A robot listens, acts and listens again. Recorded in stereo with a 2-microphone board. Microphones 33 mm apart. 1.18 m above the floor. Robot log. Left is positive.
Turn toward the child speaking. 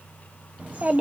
note: The child speaking: about 45° right or 135° right.
cmd yaw -45
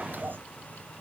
note: So it is at 90° right.
cmd yaw -90
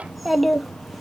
end: Found it: a child speaking, straight ahead, under 1 m away.